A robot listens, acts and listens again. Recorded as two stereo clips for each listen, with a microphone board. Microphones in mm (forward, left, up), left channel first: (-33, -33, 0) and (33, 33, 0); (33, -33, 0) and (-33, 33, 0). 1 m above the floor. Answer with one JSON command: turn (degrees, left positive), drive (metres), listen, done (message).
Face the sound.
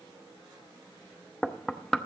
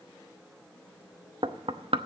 {"turn": 140}
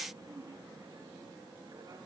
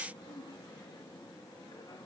{"listen": true}
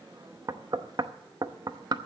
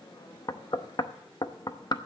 {"done": "Found it: knocking, straight ahead, under 1 m away."}